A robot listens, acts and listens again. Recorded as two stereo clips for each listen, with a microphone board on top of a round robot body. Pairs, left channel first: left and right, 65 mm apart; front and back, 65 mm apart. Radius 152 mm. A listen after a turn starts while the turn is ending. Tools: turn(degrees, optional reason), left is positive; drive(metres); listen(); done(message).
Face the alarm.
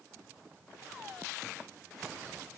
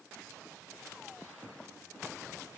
listen()
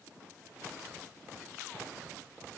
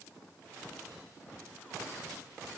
listen()
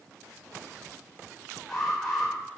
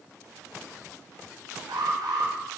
turn(degrees=175, reason="The alarm: 175° left.")
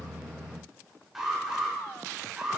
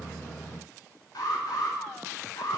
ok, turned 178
done("Facing the alarm, over 4 m away.")